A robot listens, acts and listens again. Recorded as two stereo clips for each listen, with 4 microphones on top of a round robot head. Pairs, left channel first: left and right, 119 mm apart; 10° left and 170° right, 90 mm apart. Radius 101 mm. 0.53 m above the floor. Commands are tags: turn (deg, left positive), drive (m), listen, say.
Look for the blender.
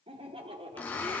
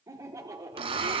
<turn deg="170"/>
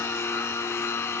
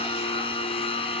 <turn deg="20"/>
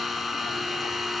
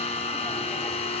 <say>Facing the blender, 1 to 2 m away.</say>